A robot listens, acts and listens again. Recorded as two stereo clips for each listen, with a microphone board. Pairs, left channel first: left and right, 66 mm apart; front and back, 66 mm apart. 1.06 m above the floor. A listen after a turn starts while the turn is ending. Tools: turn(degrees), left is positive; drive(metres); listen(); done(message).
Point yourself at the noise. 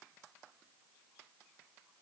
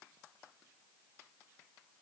listen()
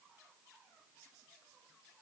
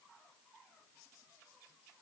listen()
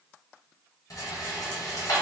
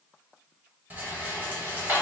turn(degrees=115)
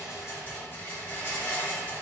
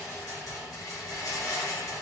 turn(degrees=30)
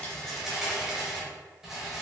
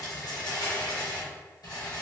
done("Found it: a rattle, straight ahead, 1 to 2 m away.")